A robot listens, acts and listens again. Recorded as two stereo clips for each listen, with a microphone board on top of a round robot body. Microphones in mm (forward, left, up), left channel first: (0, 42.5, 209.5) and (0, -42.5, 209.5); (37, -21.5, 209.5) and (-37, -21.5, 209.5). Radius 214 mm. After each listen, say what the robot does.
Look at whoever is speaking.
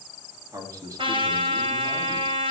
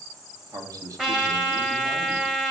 Turn 140° right.
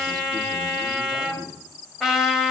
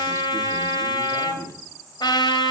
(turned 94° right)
Turn 45° right.
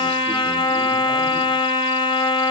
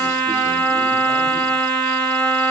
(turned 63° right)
Turn 15° left.
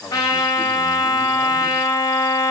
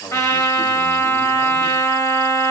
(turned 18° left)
I heard a man speaking from this way, but can't make it out now.